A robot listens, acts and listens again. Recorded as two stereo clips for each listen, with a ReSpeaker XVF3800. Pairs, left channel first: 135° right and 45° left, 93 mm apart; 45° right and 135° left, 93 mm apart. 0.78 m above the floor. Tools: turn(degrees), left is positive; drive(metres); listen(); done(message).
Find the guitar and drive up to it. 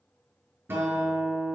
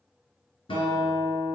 turn(degrees=-25)
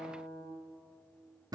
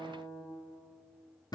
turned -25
drive(metres=1.0)
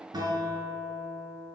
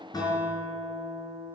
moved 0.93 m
drive(metres=1.0)
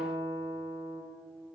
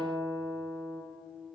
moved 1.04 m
drive(metres=1.0)
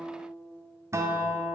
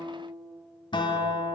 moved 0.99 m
turn(degrees=-15)
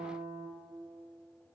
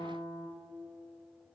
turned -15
drive(metres=1.0)
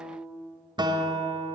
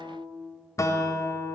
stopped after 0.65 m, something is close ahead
turn(degrees=10)
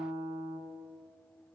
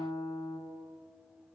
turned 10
done("Arrived at the guitar, straight ahead.")